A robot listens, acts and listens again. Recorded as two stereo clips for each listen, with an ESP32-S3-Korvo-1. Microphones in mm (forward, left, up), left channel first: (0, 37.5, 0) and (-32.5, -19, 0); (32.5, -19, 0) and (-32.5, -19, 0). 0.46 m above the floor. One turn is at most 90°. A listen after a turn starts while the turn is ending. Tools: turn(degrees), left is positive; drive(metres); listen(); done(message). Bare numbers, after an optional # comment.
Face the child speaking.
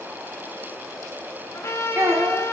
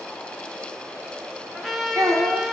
# The child speaking: 165° right.
turn(-90)
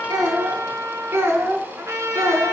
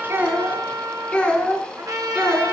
# The child speaking is now 80° right.
turn(-80)
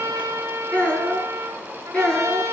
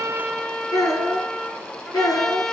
# The child speaking is now 15° right.
turn(-15)
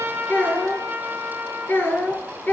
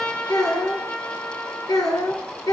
done("Found it: a child speaking, straight ahead, 2 to 4 m away.")